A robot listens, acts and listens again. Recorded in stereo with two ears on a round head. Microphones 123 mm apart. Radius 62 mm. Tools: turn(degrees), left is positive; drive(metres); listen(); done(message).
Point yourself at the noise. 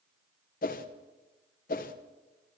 turn(degrees=70)
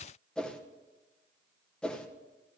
turn(degrees=10)
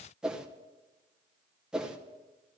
done("Facing the whoosh, under 1 m away.")